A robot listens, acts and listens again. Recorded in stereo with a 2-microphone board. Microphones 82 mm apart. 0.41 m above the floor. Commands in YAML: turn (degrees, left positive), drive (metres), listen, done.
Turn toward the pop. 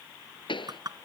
turn: 90
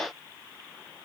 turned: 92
done: "I heard a pop from this way, but can't make it out now."